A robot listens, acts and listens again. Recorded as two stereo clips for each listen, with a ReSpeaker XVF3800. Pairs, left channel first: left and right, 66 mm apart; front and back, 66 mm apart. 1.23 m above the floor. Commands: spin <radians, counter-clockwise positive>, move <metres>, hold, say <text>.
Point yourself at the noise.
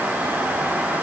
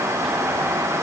hold
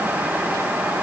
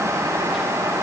hold
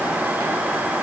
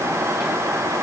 say I can't make out anything to turn to.